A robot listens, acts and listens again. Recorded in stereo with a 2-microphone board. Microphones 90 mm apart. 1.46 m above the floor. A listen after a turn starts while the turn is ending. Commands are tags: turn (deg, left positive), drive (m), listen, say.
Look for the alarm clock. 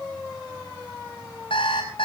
<turn deg="70"/>
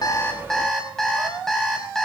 <say>Facing the alarm clock, over 4 m away.</say>